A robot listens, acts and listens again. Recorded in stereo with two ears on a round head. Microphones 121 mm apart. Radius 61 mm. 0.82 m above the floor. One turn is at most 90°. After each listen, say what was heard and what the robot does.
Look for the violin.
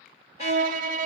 The violin: about 60° right or 120° right. Turn 60° right.
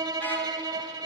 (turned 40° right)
So it is at 35° right. Turn 35° right.
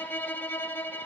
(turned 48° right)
The violin is now 15° left. Turn 15° left.
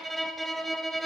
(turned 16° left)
Found it: a violin, straight ahead.